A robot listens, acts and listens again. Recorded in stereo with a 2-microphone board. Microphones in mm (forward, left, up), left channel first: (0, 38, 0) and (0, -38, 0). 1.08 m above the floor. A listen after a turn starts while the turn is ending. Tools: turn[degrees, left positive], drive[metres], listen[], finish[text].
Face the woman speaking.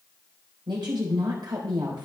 Action: turn[-90]
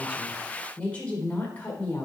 Thought: So it is at 25° left.
Action: turn[25]
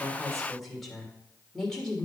Thought: The woman speaking is now 10° left.
Action: turn[10]
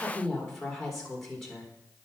Action: finish[Facing the woman speaking, 2 to 4 m away.]